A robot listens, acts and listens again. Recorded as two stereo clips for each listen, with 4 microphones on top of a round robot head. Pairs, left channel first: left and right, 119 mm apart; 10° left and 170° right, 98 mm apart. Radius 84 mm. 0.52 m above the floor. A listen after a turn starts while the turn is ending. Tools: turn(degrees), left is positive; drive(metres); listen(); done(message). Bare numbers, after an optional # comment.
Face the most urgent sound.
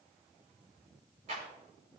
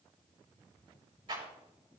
listen()
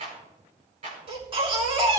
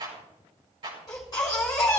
# The baby crying: 55° right.
turn(-55)
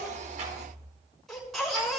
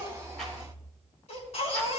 done("Facing the baby crying, over 4 m away.")